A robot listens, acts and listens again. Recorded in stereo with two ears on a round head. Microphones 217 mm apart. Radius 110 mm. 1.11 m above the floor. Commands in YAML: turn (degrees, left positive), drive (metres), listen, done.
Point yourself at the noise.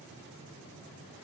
listen: true
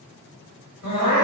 turn: 70
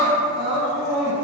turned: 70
done: "Found it: crying, straight ahead."